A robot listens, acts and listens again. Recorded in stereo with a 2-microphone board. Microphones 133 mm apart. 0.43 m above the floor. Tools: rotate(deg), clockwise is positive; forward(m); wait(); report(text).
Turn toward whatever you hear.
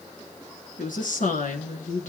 rotate(-90)
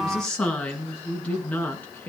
rotate(-10)
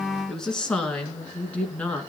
rotate(-10)
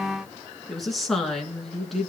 report("Found it: a woman speaking, straight ahead, over 4 m away.")